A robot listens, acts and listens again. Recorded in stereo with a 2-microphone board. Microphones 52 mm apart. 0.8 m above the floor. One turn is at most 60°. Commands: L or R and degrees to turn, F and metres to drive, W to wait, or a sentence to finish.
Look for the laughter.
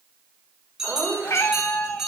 R50
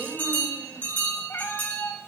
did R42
W
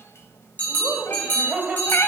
R25
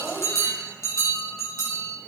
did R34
Found it: laughter, straight ahead.